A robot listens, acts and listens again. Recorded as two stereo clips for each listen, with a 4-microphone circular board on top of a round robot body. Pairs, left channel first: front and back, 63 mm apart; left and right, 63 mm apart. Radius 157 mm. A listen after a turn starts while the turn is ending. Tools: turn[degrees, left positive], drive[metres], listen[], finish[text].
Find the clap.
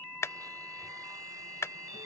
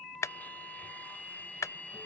Thought: The clap: 45° left.
Action: turn[45]
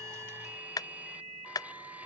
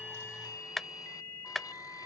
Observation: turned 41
Action: finish[Facing the clap.]